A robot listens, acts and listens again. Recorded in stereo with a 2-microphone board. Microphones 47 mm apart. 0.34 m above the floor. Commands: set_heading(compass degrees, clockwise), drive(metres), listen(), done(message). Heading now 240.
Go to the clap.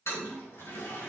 listen()
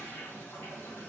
listen()
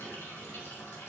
done("I can't make out a clap to turn to.")